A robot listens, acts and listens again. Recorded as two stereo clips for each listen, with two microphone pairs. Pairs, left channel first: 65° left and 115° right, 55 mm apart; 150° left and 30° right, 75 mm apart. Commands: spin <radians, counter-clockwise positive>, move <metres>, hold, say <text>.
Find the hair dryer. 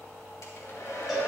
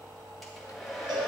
spin 1.05
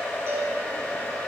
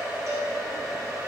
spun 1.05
spin 0.26
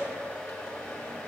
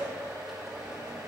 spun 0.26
say Facing the hair dryer, 1 to 2 m away.